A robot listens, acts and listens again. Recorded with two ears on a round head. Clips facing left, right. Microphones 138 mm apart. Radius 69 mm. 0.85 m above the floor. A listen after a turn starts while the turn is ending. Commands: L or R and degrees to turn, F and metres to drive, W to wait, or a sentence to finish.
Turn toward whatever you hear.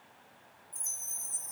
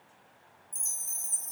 R55
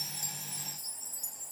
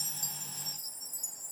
R10
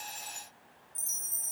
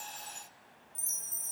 Found it: a chime, straight ahead, under 1 m away.